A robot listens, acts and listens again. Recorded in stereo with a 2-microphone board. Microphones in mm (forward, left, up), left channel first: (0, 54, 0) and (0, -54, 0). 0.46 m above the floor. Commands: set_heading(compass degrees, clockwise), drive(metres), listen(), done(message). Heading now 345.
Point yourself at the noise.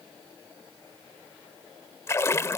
set_heading(320)
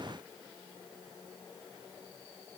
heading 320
listen()
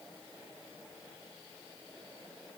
done("I heard a splash, but can't make it out now. It was about straight ahead or 130° left.")